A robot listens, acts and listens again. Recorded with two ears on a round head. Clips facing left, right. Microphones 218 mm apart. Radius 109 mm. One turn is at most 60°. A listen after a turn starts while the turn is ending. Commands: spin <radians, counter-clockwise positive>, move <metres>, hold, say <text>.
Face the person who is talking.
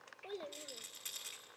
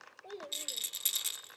spin 0.52
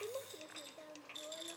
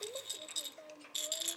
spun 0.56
spin 1.05
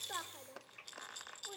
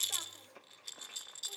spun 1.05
spin 1.05
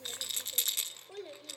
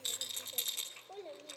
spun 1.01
spin 0.44
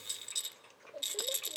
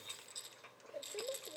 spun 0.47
say Facing the child speaking, 1 to 2 m away.